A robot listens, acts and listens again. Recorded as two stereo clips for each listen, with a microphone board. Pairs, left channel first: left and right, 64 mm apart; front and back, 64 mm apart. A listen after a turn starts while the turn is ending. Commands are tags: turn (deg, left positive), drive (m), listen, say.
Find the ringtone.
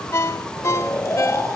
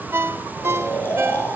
<turn deg="130"/>
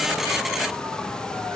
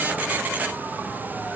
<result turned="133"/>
<listen/>
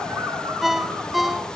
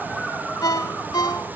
<say>Facing the ringtone, 1 to 2 m away.</say>